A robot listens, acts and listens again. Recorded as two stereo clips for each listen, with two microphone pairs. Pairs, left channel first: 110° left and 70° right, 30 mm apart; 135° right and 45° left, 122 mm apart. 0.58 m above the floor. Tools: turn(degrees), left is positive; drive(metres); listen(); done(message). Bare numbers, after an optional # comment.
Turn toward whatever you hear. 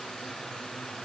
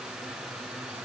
listen()
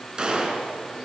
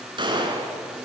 done("Facing the gunshot.")